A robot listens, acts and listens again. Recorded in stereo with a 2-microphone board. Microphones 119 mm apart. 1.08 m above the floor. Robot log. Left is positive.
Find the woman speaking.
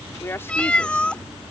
note: The woman speaking: about 20° left or 160° left.
cmd yaw +20
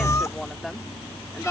end: Facing the woman speaking.